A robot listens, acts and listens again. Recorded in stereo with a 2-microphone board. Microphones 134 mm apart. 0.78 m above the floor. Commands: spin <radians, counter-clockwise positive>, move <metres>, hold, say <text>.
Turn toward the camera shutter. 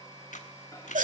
spin 1.13
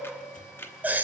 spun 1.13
spin 0.35
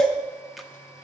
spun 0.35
hold
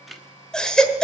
say Found it: a camera shutter, straight ahead.